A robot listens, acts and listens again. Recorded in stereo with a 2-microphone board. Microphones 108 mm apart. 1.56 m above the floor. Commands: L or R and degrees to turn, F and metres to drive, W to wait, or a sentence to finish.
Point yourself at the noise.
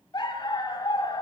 L40
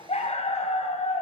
L100
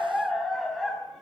Found it: a dog barking, straight ahead, over 4 m away.